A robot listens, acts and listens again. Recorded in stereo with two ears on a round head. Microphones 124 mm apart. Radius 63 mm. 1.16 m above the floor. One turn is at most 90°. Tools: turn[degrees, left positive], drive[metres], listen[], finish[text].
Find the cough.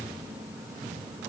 Action: listen[]
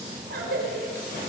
Action: turn[-90]
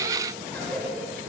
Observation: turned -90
Thought: So it is at 10° left.
Action: turn[10]
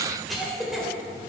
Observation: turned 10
Action: finish[Found it: a cough, straight ahead.]